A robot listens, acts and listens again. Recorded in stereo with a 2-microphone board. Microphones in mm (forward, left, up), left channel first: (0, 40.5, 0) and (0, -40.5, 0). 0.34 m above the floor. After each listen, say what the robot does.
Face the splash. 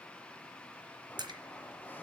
Turn 60° right.
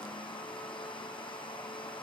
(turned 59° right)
Keep listening.
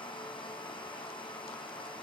I heard a splash, but can't make it out now. It was about straight ahead or 60° right.